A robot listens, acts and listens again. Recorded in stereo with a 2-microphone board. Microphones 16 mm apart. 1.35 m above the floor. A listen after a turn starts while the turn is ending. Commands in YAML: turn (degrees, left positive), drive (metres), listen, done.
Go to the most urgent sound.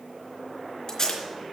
listen: true
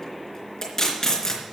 listen: true
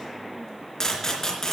done: "I can't make out anything urgent to turn to."